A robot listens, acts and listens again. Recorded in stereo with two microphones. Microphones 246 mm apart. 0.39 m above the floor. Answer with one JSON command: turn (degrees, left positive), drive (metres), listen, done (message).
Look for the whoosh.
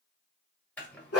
{"listen": true}
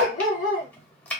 {"listen": true}
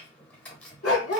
{"done": "I can't make out a whoosh to turn to."}